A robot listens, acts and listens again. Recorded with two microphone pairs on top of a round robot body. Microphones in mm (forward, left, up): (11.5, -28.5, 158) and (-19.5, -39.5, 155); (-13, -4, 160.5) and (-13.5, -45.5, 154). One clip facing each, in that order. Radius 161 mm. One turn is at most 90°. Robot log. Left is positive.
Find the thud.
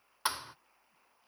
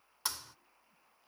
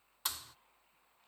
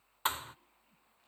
note: The thud: 40° right.
cmd yaw -40
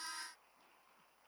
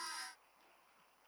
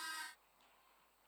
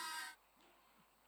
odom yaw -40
end: I heard a thud from this way, but can't make it out now.